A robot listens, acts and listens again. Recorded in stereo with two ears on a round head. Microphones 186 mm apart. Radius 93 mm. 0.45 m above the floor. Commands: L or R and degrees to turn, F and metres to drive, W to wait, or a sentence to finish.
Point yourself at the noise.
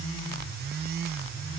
W
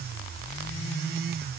W
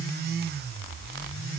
I can't make out anything.